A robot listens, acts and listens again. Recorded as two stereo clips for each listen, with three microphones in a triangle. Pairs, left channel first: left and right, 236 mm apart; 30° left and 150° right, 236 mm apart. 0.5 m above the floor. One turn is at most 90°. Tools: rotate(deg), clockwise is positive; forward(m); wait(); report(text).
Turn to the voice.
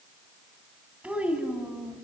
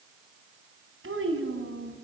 rotate(90)
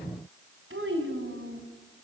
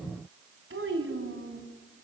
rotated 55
rotate(90)
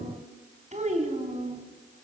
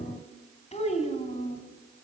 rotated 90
rotate(30)
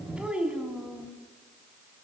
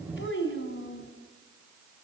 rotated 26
report("Facing the child speaking.")